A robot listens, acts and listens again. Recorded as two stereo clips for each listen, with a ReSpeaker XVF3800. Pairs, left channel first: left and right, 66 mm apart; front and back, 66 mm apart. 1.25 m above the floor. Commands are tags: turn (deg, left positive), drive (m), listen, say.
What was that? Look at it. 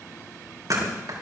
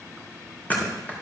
<turn deg="-60"/>
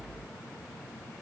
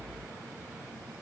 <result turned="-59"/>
<say>Facing where the thud came from. I can't hear it now.</say>